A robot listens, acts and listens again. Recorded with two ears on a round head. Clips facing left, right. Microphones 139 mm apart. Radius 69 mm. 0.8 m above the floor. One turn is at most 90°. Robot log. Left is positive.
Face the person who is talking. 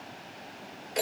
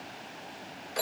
cmd idle
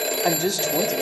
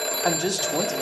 cmd yaw +30
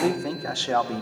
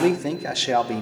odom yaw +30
note: So it is at 20° right.
cmd yaw -20
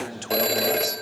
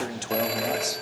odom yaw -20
end: Facing the man speaking.